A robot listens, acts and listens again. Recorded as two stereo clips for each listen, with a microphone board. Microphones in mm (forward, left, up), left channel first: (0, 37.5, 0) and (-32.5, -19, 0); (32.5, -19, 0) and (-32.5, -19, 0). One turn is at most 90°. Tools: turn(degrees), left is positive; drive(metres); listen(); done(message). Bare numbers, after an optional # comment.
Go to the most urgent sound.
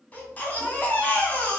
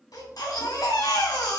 drive(1.0)
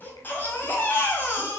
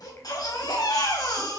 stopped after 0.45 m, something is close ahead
done("Something is in my way. I am facing the baby crying but have not reached it.")